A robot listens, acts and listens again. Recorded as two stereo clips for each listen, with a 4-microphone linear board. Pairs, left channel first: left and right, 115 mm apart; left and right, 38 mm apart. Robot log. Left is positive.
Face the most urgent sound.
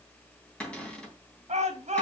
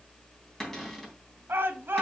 cmd yaw -90
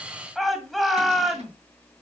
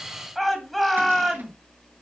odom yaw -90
end: Found it: a shout, straight ahead.